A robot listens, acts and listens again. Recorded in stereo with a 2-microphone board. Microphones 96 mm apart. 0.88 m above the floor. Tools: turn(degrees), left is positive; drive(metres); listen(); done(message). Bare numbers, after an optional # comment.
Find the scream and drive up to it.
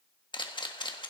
listen()
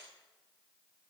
listen()
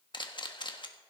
done("I can't make out a scream to turn to.")